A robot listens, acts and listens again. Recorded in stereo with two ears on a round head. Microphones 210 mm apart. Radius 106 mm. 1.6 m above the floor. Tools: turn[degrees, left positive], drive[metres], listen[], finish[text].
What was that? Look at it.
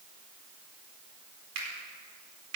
Action: turn[-90]
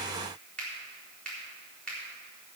Action: finish[Found it: a finger snap, straight ahead, over 4 m away.]